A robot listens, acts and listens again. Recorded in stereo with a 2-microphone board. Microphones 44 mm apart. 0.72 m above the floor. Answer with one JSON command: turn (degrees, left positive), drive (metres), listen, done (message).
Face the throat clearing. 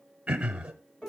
{"turn": -20}
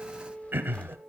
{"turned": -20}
{"turn": -135}
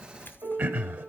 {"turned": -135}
{"turn": -50}
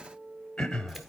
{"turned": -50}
{"turn": 15}
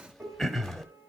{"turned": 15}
{"done": "Found it: throat clearing, straight ahead, 1 to 2 m away."}